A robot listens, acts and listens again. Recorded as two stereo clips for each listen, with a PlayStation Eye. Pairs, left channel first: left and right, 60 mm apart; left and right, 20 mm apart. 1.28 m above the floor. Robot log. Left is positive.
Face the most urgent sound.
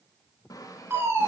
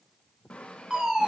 note: The fire alarm: about 45° right or 135° right.
cmd yaw -45
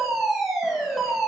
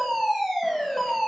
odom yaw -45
end: Facing the fire alarm.